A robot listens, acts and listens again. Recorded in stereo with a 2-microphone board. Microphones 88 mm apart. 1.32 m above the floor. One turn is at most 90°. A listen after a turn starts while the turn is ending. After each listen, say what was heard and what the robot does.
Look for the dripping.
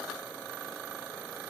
Keep listening.
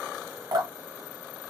The dripping: about 45° right or 135° right. Turn 45° right.
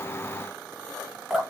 Facing the dripping.